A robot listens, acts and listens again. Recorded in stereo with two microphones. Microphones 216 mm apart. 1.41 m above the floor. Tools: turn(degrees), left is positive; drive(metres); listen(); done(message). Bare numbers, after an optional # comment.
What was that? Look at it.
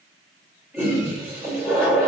turn(-30)
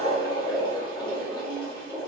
# So it is at 20° left.
turn(20)
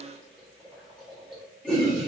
done("Found it: a toilet flushing, straight ahead.")